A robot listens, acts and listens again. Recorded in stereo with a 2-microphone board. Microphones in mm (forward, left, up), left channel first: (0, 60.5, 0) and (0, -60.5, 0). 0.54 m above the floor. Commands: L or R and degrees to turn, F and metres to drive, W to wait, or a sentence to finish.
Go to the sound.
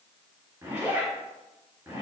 R20
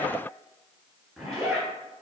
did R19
F1.0
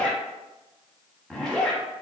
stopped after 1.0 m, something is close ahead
I am next to the zipper.